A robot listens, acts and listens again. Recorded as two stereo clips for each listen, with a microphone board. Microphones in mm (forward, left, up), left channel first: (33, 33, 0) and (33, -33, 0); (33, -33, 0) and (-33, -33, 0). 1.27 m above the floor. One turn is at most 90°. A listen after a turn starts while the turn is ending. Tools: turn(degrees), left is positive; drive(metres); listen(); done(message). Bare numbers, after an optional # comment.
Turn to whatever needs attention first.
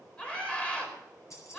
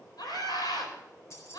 # The scream: 15° left.
turn(15)
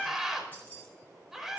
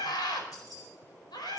done("Found it: a scream, straight ahead.")